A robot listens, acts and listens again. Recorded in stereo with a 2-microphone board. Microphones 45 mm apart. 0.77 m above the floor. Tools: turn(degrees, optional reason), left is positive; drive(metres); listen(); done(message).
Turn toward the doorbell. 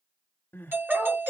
turn(degrees=-60, reason="The doorbell: about 60° right or 120° right.")
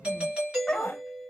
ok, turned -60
turn(degrees=-25, reason="So it is at 25° right.")
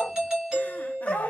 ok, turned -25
turn(degrees=-20, reason="The doorbell is now 20° right.")
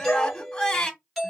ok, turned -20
done("Found it: a doorbell, straight ahead.")